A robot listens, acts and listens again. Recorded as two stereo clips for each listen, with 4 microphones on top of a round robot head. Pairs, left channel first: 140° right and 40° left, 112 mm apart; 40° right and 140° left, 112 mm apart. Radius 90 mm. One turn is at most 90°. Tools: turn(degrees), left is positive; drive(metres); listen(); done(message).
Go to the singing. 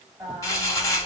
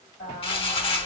turn(degrees=-35)
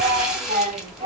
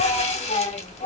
drive(metres=1.0)
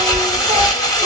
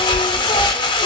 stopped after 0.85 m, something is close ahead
listen()
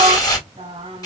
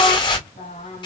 turn(degrees=-15)
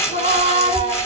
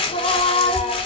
done("I am next to the singing.")